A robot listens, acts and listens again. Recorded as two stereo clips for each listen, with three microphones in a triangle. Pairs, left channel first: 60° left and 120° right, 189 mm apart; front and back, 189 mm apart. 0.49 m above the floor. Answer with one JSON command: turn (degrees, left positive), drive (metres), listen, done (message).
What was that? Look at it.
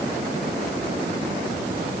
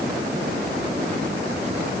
{"listen": true}
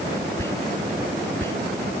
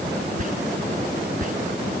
{"turn": 135}
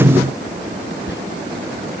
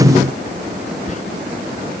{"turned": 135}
{"turn": 50}
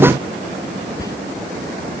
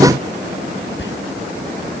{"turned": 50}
{"turn": -10}
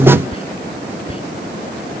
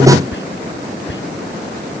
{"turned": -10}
{"done": "Found it: whispering, straight ahead."}